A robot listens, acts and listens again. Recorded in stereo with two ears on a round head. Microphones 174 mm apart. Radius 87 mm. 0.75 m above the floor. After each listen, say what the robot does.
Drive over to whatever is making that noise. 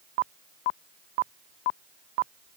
Keep listening.
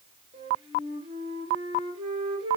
Turn 25° right.
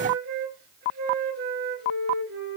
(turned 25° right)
Turn 130° right.
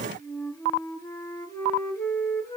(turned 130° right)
Turn 15° left.
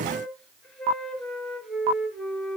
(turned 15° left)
Drive 1.0 m forward.
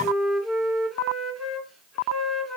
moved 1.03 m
Drive 1.0 m forward.
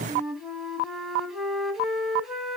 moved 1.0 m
Drive 1.0 m forward.
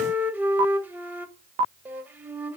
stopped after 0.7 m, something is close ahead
Turn 10° right.
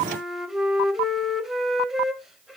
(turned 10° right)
I am next to the flute.